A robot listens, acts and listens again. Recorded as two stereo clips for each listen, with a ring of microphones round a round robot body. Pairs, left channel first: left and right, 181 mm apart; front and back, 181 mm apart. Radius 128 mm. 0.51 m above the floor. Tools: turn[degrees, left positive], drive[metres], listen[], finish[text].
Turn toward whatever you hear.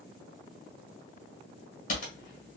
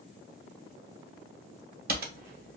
Thought: The typing on a keyboard: 145° left.
Action: turn[145]
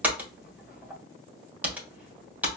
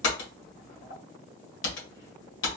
Thought: The typing on a keyboard is now 10° right.
Action: turn[-10]
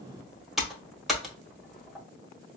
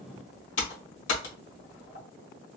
Action: finish[Found it: typing on a keyboard, straight ahead, 1 to 2 m away.]